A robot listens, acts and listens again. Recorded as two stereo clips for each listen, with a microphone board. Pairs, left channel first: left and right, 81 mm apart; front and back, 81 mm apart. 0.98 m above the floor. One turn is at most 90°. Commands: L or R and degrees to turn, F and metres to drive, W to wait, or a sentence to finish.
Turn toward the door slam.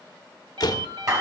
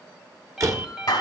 L90
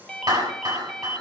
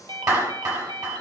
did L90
L40
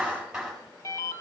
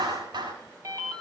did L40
I heard a door slam from this way, but can't make it out now.